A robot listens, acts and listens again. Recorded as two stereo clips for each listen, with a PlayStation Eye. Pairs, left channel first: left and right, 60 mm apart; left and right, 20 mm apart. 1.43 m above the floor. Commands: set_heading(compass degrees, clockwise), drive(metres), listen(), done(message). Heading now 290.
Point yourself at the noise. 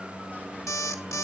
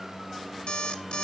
set_heading(235)
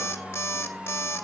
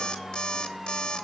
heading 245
set_heading(190)
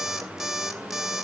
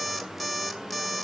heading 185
done("Facing the alarm clock.")